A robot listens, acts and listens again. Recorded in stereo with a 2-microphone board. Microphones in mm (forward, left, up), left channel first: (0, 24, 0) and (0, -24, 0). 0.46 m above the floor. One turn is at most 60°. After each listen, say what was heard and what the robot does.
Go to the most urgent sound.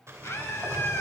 The scream: about 55° left or 125° left. Turn 55° left.
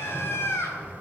So it is at 60° left. Turn 60° left.
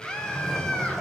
The scream is now 15° left. Turn 15° left.
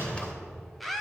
Drive 1.0 m forward.
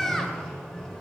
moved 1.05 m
Drive 1.0 m forward.
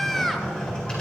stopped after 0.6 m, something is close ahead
I am next to the scream.